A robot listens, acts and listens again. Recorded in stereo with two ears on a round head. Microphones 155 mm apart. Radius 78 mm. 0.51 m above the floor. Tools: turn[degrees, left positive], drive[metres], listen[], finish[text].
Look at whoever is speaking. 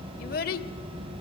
Thought: The child speaking: about 50° left or 130° left.
Action: turn[50]
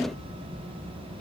Action: listen[]
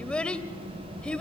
Action: finish[Found it: a child speaking, straight ahead, 1 to 2 m away.]